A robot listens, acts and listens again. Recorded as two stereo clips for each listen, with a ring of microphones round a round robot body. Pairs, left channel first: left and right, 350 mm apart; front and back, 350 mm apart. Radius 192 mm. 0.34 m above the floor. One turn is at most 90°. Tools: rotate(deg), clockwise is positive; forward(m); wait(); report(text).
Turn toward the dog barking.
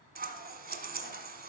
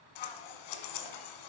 wait()
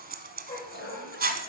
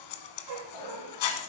rotate(-90)
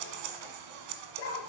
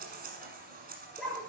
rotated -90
rotate(-90)
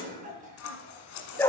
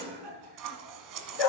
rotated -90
report("Facing the dog barking, 2 to 4 m away.")